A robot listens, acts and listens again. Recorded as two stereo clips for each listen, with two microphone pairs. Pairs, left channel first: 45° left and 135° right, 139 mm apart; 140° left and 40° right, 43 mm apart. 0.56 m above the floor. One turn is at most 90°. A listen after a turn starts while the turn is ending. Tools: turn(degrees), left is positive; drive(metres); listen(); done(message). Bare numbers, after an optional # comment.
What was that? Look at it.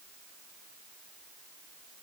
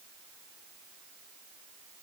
listen()
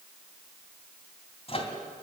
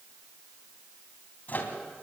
# The microwave: 90° left.
turn(90)
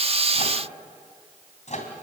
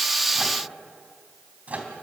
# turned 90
# The microwave is now 10° left.
turn(10)
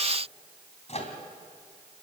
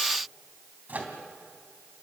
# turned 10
done("Found it: a microwave, straight ahead.")